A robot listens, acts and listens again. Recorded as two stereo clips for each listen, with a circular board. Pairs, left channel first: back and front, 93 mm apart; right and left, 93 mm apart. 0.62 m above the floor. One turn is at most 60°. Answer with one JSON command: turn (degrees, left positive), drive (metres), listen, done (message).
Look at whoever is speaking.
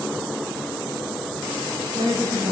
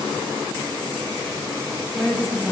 {"done": "Found it: a woman speaking, straight ahead."}